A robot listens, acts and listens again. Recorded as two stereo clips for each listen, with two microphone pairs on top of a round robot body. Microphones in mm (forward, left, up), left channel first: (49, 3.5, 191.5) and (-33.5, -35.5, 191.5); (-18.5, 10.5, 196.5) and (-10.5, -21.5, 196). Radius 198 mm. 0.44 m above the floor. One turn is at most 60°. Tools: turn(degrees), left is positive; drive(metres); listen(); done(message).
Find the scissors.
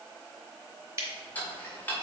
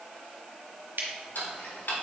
turn(degrees=-60)
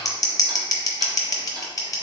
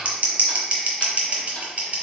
turn(degrees=-25)
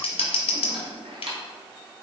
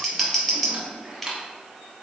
turn(degrees=20)
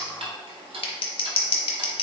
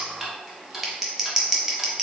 done("Facing the scissors.")